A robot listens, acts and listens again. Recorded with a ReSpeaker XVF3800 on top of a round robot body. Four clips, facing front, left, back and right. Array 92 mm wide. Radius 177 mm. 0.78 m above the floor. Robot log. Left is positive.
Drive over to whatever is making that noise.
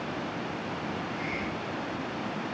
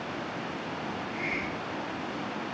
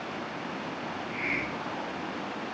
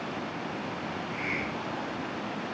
note: The hiss: 150° right.
cmd yaw -150
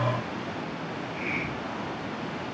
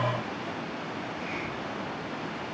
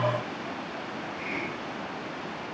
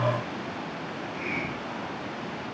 note: The hiss is now 35° right.
cmd yaw -35
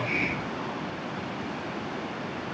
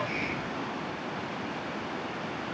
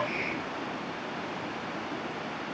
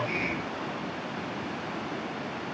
cmd fwd 1.0
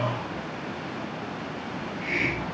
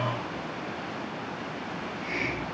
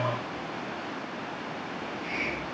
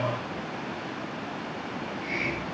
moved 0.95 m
cmd fwd 1.0
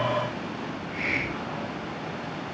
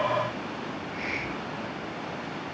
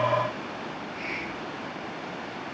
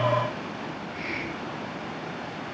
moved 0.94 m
cmd fwd 1.0
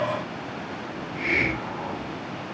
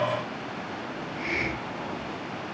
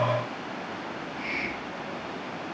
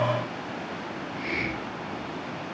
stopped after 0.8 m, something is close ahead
note: The hiss is now 10° left.
cmd yaw +10
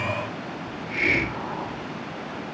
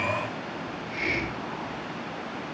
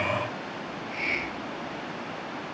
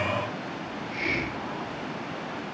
end: Arrived at the hiss, straight ahead.